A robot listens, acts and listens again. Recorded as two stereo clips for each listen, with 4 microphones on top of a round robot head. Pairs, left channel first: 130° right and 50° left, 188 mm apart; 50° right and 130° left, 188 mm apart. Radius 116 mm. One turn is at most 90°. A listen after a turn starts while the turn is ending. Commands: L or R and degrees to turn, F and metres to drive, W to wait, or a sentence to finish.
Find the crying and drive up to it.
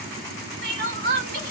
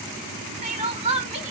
L80
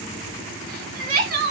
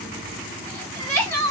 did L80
L25
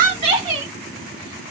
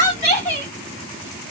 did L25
R10
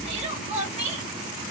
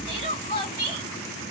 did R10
F1.0
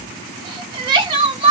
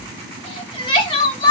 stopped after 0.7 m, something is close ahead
Arrived at the crying, straight ahead.